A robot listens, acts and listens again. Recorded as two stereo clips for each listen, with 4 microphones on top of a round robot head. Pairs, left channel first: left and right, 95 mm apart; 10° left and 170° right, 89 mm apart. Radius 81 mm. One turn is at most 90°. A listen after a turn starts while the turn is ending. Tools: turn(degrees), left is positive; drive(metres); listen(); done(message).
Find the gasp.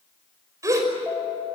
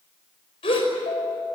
turn(degrees=-35)
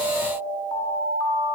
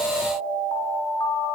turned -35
done("I heard a gasp from this way, but can't make it out now.")